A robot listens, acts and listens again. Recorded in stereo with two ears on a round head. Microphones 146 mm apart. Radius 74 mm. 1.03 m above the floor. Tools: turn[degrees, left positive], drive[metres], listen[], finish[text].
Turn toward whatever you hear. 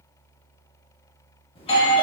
Thought: The doorbell: about 35° left or 145° left.
Action: turn[35]
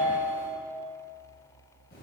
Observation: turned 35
Thought: So it is at 105° left.
Action: turn[105]
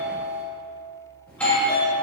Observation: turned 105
Thought: The doorbell is now 10° left.
Action: turn[10]
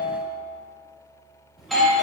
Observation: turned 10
Action: finish[Facing the doorbell.]